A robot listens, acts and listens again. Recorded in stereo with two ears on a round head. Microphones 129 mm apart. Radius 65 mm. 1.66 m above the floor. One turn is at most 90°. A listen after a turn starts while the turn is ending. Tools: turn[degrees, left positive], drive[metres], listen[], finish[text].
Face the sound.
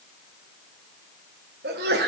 Thought: The sneeze: about 70° right or 110° right.
Action: turn[-70]
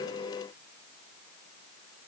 Action: listen[]
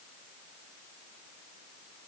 Action: finish[I heard a sneeze, but can't make it out now. It was about straight ahead or 40° right.]